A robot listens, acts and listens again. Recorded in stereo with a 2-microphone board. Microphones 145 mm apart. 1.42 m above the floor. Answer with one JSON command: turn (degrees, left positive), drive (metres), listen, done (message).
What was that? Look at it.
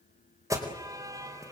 {"turn": -20}
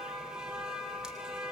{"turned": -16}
{"done": "Facing the alarm, over 4 m away."}